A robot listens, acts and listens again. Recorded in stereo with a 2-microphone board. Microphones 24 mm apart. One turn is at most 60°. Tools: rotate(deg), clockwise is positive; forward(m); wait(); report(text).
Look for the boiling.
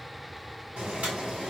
rotate(60)
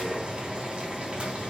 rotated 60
rotate(50)
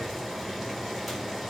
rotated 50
report("Found it: boiling, straight ahead, 2 to 4 m away.")